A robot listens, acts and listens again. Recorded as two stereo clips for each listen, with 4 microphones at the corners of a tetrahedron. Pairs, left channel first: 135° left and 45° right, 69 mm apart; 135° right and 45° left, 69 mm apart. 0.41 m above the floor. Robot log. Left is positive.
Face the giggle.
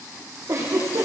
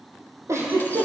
end: Facing the giggle, over 4 m away.